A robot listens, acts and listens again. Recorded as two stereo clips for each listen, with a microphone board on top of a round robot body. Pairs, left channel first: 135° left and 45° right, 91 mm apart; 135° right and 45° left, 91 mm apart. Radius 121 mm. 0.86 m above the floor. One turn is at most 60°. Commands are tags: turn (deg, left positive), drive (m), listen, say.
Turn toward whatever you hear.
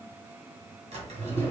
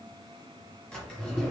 <turn deg="-50"/>
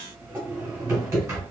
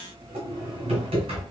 <turn deg="20"/>
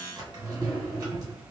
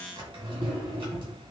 <turn deg="10"/>
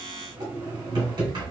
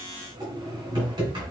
<say>Facing the drawer.</say>